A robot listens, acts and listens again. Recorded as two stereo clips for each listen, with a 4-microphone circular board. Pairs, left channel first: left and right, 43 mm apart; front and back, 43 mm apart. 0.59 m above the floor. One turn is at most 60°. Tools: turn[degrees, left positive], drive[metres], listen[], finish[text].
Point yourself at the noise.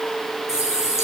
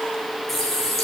Thought: The running tap: 90° left.
Action: turn[60]
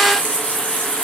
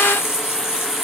Thought: The running tap is now 30° left.
Action: turn[30]
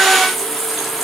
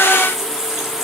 Action: finish[Found it: a running tap, straight ahead, over 4 m away.]